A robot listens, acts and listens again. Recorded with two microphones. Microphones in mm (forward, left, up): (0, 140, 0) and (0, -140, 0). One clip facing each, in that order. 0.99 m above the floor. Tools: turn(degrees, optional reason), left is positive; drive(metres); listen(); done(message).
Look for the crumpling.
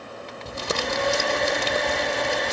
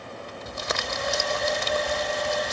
turn(degrees=40, reason="The crumpling: about 40° left or 140° left.")
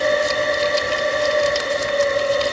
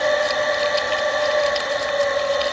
listen()
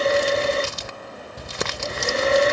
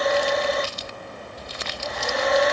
turn(degrees=100, reason="So it is at 100° left.")
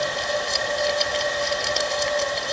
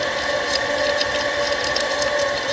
listen()
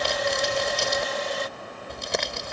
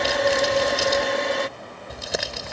done("Found it: crumpling, straight ahead.")